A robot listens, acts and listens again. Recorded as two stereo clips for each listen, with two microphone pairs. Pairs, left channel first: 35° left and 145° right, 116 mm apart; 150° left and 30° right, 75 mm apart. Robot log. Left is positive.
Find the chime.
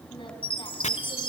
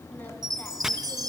end: Found it: a chime, straight ahead, 2 to 4 m away.